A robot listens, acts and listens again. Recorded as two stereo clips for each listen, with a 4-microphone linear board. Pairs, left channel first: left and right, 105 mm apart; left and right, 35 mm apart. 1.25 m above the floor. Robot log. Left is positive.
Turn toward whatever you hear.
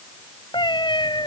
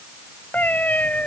note: The cat meowing: about 45° left or 135° left.
cmd yaw +45
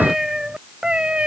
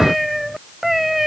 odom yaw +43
note: So it is at 10° right.
cmd yaw -10
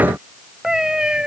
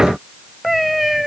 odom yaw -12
note: The cat meowing is now 10° right.
cmd yaw -10
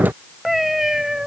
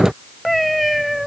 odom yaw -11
end: Facing the cat meowing.